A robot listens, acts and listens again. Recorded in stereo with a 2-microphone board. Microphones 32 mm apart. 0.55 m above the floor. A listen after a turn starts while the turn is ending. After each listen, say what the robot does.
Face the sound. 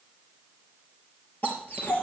Turn 70° left.
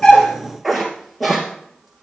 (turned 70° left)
Found it: a dog barking, straight ahead, 2 to 4 m away.